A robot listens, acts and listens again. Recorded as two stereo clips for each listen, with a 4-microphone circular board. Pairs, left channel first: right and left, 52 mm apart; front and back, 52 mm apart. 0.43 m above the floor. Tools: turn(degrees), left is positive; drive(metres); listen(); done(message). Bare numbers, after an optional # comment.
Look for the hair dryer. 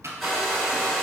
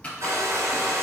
# The hair dryer: straight behind.
turn(180)
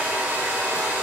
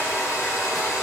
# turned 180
# The hair dryer is now 30° left.
turn(30)
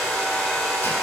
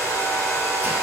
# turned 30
# The hair dryer is now 10° right.
turn(-10)
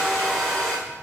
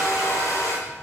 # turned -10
done("Found it: a hair dryer, straight ahead, under 1 m away.")